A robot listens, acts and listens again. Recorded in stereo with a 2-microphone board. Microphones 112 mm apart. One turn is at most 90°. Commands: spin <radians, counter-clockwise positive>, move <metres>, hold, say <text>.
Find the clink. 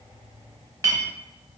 spin -0.44
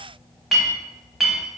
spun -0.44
say Facing the clink.